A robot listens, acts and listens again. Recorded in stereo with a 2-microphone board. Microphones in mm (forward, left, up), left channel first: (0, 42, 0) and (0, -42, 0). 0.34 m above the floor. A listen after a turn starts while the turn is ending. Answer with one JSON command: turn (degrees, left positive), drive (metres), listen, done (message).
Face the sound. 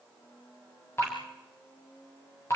{"turn": 30}
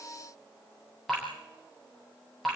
{"done": "Facing the dripping."}